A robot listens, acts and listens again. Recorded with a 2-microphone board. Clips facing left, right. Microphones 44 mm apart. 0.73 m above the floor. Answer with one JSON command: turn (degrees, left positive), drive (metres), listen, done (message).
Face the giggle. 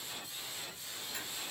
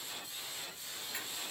{"listen": true}
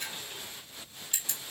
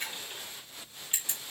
{"listen": true}
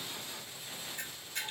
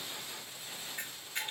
{"done": "I can't make out a giggle, only a camera shutter."}